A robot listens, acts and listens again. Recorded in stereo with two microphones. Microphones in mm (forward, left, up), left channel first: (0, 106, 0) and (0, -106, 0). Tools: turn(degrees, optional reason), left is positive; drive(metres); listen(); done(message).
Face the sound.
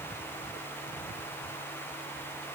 listen()
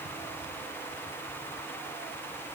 listen()
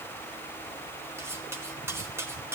turn(degrees=-30)
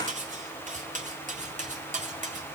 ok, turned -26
turn(degrees=-140, reason="So it is at 140° right.")
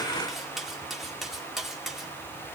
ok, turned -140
done("Facing the cutlery clinking.")